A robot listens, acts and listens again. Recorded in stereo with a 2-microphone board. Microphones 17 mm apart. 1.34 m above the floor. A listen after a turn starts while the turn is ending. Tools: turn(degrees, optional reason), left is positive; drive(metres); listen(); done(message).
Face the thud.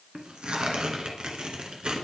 listen()
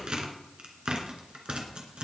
listen()
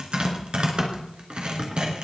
done("I can't make out a thud to turn to.")